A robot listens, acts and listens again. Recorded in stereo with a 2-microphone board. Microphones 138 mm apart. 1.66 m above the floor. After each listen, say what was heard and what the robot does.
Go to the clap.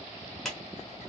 Turn 30° left.
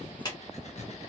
So it is at 150° left. Turn 150° left.
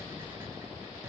Keep listening.
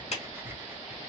The clap is now 60° left. Turn 60° left.
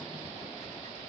Keep listening.
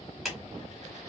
Drive 1.0 m forward.
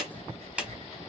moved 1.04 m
The clap is now 10° right. Turn 10° right.
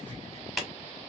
Drive 1.0 m forward.
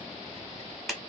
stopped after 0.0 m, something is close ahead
Arrived at the clap, straight ahead.